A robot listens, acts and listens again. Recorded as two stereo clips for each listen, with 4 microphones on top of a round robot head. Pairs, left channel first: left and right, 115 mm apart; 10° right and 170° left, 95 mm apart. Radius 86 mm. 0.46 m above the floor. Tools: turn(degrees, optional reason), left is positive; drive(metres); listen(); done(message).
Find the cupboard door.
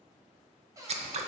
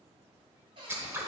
turn(degrees=-150, reason="The cupboard door: 150° right.")
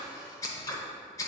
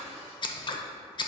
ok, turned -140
turn(degrees=-10, reason="Nothing new. It was at 10° right.")
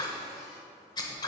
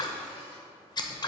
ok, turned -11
listen()
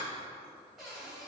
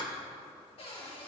done("Facing the cupboard door, 2 to 4 m away.")